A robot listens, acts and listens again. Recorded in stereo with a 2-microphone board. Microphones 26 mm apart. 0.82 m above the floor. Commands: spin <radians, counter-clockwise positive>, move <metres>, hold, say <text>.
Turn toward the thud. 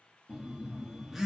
hold
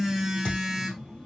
spin 0.87
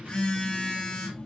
hold
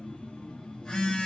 say I heard a thud, but can't make it out now. It was about straight ahead or 80° left.